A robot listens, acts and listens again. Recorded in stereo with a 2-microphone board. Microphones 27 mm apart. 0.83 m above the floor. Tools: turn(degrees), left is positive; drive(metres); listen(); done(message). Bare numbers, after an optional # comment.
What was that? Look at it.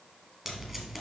turn(-30)
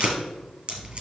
# So it is at 135° right.
turn(-135)
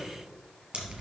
# The tape being pulled is now 40° right.
turn(-40)
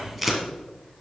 done("Facing the tape being pulled.")